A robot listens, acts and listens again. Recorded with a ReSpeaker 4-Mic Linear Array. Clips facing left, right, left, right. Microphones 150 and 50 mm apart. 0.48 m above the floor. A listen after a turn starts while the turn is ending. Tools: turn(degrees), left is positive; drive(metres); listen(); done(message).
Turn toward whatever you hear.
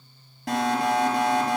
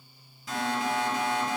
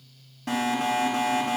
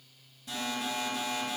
turn(degrees=65)
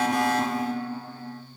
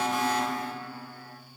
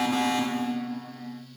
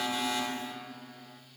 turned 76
turn(degrees=35)
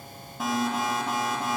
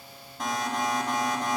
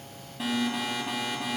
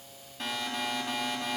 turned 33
done("Found it: an alarm, straight ahead, 2 to 4 m away.")